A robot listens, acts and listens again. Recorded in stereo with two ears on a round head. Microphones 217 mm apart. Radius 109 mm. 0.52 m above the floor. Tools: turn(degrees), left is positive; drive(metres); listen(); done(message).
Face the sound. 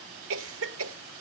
turn(degrees=-60)
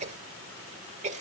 turn(degrees=-35)
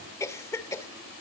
turn(degrees=15)
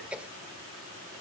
done("Found it: a cough, straight ahead, 1 to 2 m away.")